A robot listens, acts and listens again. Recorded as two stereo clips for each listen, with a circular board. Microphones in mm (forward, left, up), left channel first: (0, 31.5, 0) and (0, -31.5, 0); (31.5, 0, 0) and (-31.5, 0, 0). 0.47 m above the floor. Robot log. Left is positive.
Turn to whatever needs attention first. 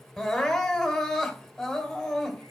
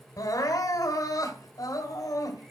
end: Found it: crying, straight ahead, 2 to 4 m away.